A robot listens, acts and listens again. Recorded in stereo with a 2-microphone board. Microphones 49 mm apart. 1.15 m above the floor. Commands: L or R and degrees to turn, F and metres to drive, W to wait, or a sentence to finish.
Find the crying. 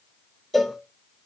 W
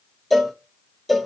W
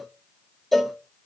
I can't make out crying, only a cowbell.